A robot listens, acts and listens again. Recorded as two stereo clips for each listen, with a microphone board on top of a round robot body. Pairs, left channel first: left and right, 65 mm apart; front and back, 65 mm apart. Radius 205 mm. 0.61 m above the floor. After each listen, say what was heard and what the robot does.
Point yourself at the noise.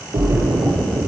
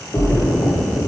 The splash: 65° right. Turn 65° right.
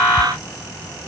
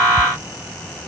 I heard a splash from this way, but can't make it out now.